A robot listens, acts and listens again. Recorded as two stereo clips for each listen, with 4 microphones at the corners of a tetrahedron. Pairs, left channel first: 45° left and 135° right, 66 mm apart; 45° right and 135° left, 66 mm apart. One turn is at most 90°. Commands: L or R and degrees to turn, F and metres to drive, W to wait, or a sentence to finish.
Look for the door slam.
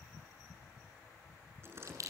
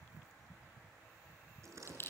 L90
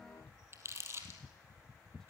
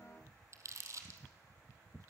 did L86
L90
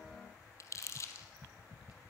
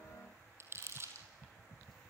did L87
Facing where the door slam came from. I can't hear it now.